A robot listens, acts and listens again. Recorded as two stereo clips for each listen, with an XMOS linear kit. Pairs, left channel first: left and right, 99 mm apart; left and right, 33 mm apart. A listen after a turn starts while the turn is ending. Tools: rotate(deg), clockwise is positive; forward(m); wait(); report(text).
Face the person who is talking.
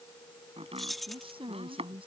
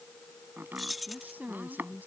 rotate(60)
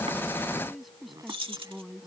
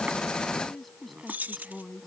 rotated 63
report("Facing the woman speaking.")